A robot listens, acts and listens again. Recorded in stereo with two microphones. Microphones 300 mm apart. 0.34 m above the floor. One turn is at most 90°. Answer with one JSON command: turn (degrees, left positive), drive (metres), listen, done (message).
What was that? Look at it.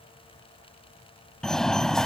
{"turn": 30}
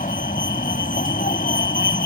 {"turn": 90}
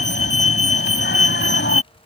{"turn": 45}
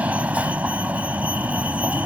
{"done": "Facing the fire alarm."}